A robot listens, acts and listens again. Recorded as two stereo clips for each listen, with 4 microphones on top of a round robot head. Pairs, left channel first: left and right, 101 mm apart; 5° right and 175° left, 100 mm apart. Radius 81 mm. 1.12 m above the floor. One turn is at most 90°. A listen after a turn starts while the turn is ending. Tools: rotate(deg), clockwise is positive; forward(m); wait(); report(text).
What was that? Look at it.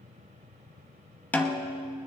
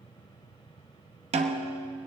rotate(-90)
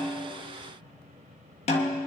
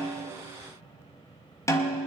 rotate(-60)
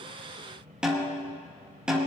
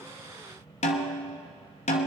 report("Facing the snare drum.")